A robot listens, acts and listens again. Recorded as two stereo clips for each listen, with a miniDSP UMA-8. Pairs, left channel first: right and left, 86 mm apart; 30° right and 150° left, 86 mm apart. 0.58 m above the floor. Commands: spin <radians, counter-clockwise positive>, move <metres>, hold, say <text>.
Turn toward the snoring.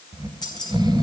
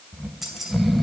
spin 1.05
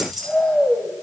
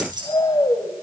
say Facing the snoring.